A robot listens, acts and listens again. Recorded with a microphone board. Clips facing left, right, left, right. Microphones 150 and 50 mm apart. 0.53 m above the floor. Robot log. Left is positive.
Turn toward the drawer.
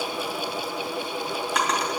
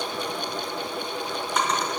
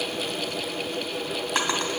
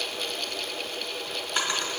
cmd yaw +90
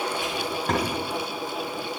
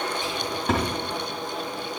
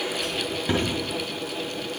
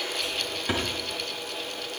end: Found it: a drawer, straight ahead, 2 to 4 m away.